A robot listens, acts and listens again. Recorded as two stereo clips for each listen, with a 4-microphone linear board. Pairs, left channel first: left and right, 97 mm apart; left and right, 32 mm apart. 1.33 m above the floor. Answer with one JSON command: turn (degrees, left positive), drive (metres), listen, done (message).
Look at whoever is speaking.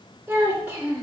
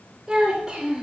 {"turn": -30}
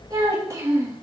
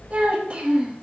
{"turn": -155}
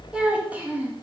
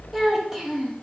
{"turn": -20}
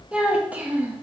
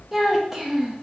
{"turn": -20}
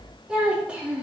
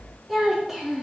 {"turn": -10}
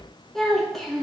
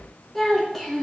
{"done": "Found it: a child speaking, straight ahead, 2 to 4 m away."}